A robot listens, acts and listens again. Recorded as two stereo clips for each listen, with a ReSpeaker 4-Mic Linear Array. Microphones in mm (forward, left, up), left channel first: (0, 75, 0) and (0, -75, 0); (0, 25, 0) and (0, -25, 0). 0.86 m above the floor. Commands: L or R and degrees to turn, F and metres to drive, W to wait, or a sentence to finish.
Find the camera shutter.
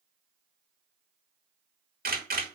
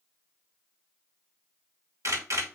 R70
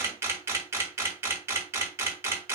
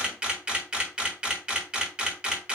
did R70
R15
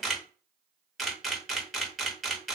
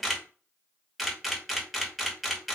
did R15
Facing the camera shutter, under 1 m away.